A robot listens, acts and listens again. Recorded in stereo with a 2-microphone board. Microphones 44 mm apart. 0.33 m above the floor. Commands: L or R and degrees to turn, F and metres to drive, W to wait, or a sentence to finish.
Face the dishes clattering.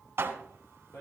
R65
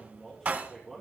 R40
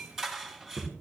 R10
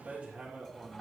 W
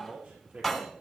Found it: dishes clattering, straight ahead, 2 to 4 m away.